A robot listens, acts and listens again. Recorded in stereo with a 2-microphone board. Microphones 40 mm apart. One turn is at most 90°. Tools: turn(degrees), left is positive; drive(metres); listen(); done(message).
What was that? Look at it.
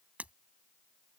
turn(degrees=-35)
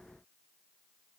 listen()
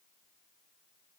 done("I heard breaking glass, but can't make it out now. It was about straight ahead or 110° right.")